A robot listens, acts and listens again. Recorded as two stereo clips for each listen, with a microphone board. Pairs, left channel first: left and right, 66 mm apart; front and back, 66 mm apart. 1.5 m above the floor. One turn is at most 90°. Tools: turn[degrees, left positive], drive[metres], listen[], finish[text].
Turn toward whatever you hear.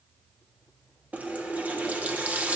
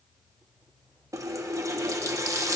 Thought: The running tap: 150° right.
Action: turn[-90]
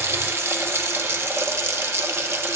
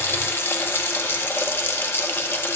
Thought: The running tap is now 45° right.
Action: turn[-45]
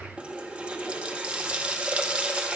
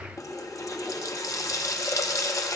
Thought: The running tap is now 20° right.
Action: turn[-20]
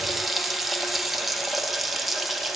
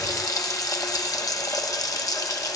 Action: finish[Facing the running tap.]